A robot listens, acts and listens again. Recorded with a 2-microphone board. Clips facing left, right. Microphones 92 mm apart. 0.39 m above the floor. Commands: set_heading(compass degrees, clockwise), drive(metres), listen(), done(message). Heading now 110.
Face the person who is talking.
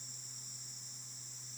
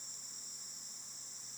listen()
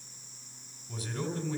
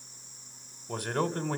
set_heading(175)
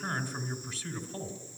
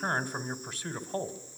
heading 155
set_heading(215)
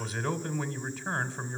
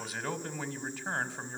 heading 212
done("Facing the man speaking.")